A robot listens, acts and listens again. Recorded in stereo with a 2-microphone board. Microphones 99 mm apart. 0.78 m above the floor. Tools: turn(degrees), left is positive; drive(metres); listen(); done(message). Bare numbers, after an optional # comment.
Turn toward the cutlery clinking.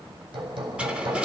turn(-30)
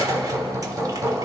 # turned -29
# So it is at 140° right.
turn(-140)
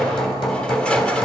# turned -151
# The cutlery clinking is now 10° left.
turn(10)
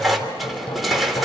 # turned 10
done("Found it: cutlery clinking, straight ahead.")